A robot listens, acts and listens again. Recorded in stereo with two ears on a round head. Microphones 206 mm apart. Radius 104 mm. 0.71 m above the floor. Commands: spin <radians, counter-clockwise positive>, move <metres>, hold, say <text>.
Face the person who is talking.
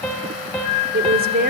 spin -0.70
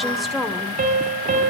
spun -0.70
say Facing the woman speaking, 2 to 4 m away.